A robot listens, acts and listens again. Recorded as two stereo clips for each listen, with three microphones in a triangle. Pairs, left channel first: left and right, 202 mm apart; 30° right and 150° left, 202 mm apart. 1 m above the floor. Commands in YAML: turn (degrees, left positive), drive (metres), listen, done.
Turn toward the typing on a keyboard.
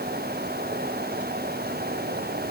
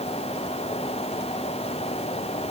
listen: true
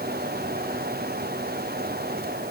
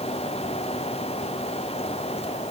listen: true
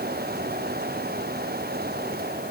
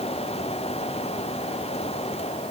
done: "I can't make out typing on a keyboard."